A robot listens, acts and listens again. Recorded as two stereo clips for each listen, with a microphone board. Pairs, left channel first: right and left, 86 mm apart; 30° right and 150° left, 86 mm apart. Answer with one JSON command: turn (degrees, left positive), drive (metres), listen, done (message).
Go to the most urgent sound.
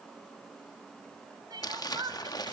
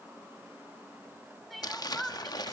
{"turn": 60}
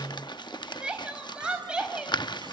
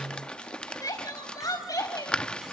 {"turn": 10}
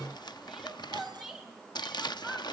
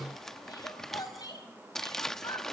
{"drive": 1.0}
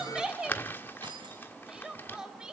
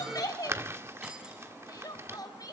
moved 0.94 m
{"drive": 1.0}
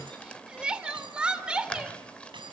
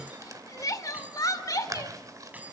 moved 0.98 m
{"turn": 10}
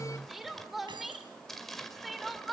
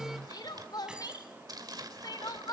{"drive": 1.0}
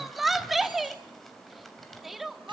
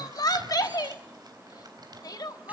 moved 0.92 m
{"drive": 1.0}
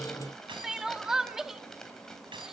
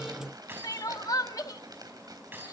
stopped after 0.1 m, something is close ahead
{"done": "Arrived at the crying, straight ahead."}